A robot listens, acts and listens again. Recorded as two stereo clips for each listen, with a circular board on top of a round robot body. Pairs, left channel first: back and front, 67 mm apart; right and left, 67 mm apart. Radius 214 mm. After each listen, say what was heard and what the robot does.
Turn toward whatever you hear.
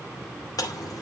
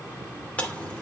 The chewing: 160° right. Turn 160° right.
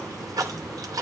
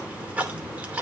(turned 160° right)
The chewing is now 25° left. Turn 25° left.
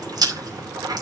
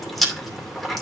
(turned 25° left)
Found it: chewing, straight ahead.